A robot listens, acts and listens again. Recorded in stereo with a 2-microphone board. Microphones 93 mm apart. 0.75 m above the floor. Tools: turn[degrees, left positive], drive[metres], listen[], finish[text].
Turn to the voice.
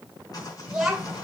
Action: turn[-30]
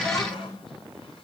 Thought: So it is at 35° left.
Action: turn[35]
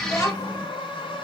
Thought: The child speaking is now 35° left.
Action: turn[35]
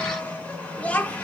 Thought: The child speaking is now 15° left.
Action: turn[15]
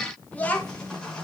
Thought: The child speaking is now 20° left.
Action: turn[20]
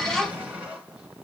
Action: finish[Found it: a child speaking, straight ahead.]